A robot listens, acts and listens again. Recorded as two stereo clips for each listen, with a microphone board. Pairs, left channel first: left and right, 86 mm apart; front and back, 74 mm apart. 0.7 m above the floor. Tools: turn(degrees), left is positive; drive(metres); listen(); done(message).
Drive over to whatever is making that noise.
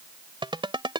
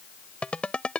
turn(degrees=-75)
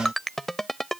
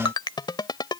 drive(metres=1.0)
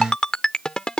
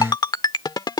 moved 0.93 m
turn(degrees=10)
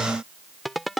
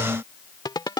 drive(metres=1.0)
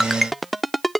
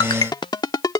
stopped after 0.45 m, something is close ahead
done("Arrived at the ringtone, straight ahead.")